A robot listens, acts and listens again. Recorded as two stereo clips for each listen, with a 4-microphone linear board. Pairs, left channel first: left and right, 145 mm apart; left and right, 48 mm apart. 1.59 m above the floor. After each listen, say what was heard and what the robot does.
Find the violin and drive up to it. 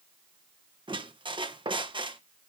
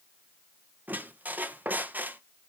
Keep listening.
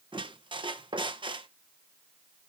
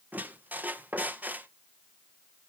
Keep listening.
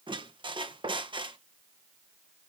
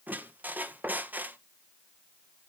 I can't make out a violin to turn to.